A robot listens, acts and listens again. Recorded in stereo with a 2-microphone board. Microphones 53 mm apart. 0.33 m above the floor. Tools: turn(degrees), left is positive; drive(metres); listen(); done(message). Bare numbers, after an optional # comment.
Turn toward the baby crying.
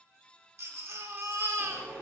# The baby crying: about 60° right or 120° right.
turn(-60)
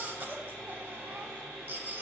# So it is at 40° right.
turn(-40)
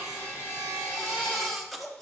done("Found it: a baby crying, straight ahead.")